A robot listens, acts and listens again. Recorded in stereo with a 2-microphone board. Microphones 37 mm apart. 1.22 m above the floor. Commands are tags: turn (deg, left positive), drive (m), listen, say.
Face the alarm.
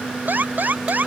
<turn deg="-60"/>
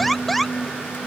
<say>Facing the alarm.</say>